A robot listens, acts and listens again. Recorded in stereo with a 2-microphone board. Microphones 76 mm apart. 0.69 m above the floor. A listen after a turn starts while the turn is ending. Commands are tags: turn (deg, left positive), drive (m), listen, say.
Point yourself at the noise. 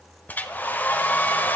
<turn deg="25"/>
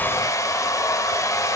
<turn deg="130"/>
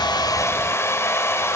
<turn deg="40"/>
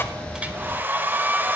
<turn deg="-30"/>
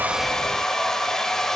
<say>Facing the hair dryer.</say>